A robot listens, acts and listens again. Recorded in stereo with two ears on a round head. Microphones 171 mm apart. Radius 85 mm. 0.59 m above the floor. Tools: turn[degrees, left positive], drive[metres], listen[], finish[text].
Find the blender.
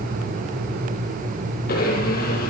Thought: The blender: about 50° left or 130° left.
Action: turn[50]
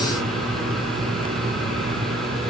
Action: listen[]
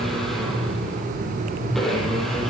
Action: finish[Facing the blender, over 4 m away.]